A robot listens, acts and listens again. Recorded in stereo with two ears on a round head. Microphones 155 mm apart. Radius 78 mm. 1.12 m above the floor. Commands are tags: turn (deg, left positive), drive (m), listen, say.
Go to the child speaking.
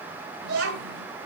<turn deg="-70"/>
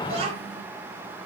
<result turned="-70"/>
<turn deg="-35"/>
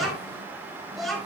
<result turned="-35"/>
<drive m="1.0"/>
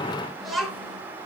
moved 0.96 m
<drive m="1.0"/>
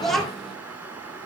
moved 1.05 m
<drive m="1.0"/>
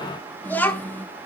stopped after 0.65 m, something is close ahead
<turn deg="10"/>
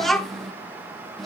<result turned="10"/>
<say>Arrived at the child speaking, straight ahead.</say>